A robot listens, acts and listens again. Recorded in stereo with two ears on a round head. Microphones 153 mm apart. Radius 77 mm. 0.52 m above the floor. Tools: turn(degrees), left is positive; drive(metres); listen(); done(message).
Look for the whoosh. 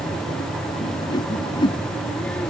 turn(degrees=30)
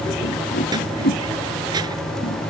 turn(degrees=120)
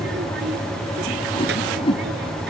turn(degrees=35)
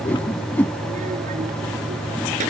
turn(degrees=10)
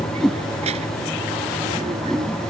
done("Facing the whoosh.")